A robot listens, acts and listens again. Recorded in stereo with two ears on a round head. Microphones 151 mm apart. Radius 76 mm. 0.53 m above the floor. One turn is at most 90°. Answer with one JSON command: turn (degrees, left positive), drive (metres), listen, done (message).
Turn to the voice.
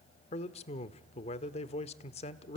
{"turn": 35}
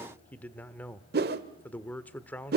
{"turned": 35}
{"turn": 10}
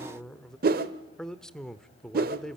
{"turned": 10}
{"done": "Facing the man speaking, 1 to 2 m away."}